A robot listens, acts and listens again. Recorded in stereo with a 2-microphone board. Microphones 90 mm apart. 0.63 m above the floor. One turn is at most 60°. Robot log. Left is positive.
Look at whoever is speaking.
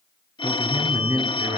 note: The man speaking: about 40° right or 140° right.
cmd yaw -40
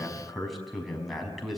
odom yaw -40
end: Facing the man speaking, over 4 m away.